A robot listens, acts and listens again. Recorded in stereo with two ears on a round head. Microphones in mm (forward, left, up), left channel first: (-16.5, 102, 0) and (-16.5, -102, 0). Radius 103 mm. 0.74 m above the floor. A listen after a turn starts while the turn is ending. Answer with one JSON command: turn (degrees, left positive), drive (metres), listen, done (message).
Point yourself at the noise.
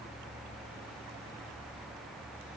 {"listen": true}
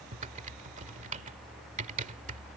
{"turn": -35}
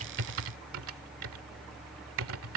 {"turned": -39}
{"turn": -110}
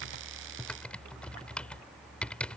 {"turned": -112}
{"done": "Found it: typing on a keyboard, straight ahead."}